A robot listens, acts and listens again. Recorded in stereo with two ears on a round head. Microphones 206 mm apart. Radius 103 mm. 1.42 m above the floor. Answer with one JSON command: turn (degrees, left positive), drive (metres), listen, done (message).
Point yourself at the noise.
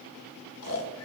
{"turn": 75}
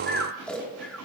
{"done": "Facing the snoring."}